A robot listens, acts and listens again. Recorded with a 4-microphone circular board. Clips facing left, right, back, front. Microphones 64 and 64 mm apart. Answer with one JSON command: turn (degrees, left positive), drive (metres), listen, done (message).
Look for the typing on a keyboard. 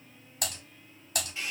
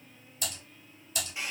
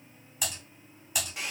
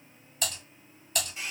{"turn": 100}
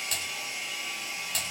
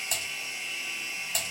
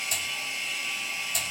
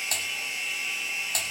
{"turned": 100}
{"turn": -15}
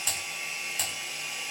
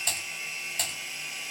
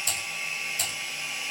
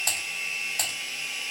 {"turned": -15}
{"done": "Found it: typing on a keyboard, straight ahead."}